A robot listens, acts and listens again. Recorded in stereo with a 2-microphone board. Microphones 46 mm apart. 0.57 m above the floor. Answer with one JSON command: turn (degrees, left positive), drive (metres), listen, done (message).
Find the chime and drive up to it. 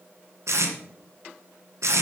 {"listen": true}
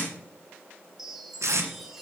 {"turn": -30}
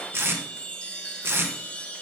{"turn": 25}
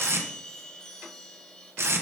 {"turn": 15}
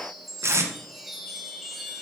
{"drive": 1.0}
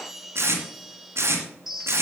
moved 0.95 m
{"drive": 1.0}
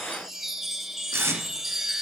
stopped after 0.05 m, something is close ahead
{"done": "I am next to the chime."}